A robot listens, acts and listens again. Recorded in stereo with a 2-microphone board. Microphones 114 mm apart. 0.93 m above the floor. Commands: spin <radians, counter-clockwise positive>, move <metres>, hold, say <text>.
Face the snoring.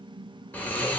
spin 0.52
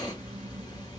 spin 2.36
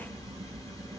spin 0.61
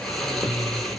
say Facing the snoring.